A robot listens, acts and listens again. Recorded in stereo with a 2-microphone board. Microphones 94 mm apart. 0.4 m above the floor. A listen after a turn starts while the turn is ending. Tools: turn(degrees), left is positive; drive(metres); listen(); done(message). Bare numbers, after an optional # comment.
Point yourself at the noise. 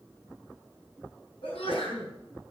turn(90)
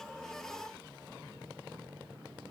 done("Facing where the sneeze came from. I can't hear it now.")